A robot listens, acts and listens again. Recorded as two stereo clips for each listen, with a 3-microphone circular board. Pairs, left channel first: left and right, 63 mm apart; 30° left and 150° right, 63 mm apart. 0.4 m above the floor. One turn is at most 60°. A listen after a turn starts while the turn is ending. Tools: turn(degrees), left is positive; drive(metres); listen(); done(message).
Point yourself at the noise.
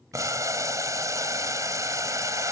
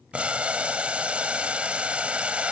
turn(degrees=-60)
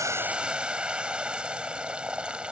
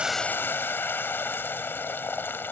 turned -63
turn(degrees=-20)
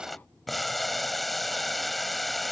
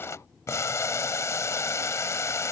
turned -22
done("Facing the boiling.")